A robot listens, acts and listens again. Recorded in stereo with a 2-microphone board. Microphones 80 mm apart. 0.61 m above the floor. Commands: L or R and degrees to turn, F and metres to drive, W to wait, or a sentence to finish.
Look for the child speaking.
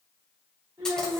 R50
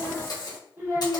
R35
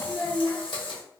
L10
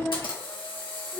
L30
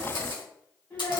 L25
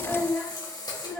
Facing the child speaking, 1 to 2 m away.